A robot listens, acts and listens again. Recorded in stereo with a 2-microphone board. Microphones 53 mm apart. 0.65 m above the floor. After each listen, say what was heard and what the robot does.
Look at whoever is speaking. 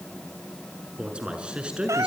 The man speaking: about 20° right or 160° right. Turn 20° right.
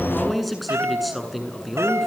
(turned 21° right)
Turn 30° left.
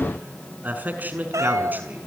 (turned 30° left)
So it is at 35° right. Turn 35° right.
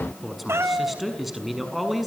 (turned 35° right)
Facing the man speaking.